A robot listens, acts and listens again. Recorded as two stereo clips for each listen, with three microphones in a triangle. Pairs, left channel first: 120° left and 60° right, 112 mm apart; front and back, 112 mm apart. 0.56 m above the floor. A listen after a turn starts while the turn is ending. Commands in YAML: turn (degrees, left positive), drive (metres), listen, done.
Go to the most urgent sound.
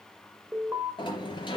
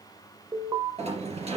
turn: -130
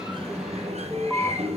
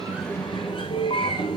turn: 25
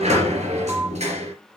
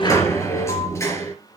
listen: true
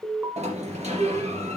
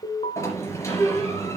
drive: 1.0
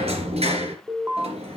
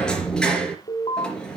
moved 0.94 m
drive: 1.0
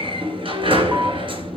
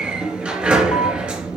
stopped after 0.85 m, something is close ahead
listen: true
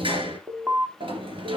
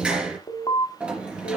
done: "Arrived at the alarm, straight ahead."